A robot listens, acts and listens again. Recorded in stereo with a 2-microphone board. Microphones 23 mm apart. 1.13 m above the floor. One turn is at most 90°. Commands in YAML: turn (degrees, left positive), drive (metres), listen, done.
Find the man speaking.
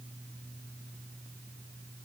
listen: true
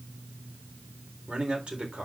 turn: -50
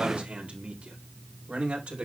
turn: -90
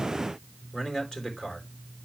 turn: 15
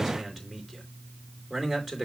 done: "Facing the man speaking."